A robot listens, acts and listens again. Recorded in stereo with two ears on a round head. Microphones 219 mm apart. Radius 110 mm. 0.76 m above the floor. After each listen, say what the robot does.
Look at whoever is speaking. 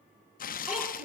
Turn 30° right.
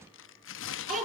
Turn 145° right.
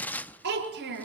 Turn 45° right.
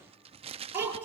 Turn 10° right.
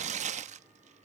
Keep listening.
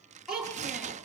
Found it: a child speaking, straight ahead.